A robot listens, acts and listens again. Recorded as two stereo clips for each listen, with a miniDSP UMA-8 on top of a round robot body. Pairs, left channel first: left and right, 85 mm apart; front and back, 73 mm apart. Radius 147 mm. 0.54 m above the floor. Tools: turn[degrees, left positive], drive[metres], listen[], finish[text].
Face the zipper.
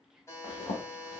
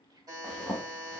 Thought: The zipper: 85° left.
Action: turn[85]
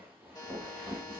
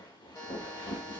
Thought: The zipper is now 20° right.
Action: turn[-20]
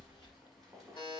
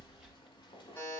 Action: finish[Found it: a zipper, straight ahead.]